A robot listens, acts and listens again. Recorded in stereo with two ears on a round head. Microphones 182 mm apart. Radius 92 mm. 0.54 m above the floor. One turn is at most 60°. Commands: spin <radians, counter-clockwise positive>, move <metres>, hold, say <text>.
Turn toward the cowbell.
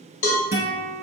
spin 1.05
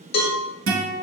spin 0.87
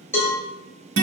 spin 0.17
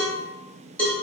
say Found it: a cowbell, straight ahead, under 1 m away.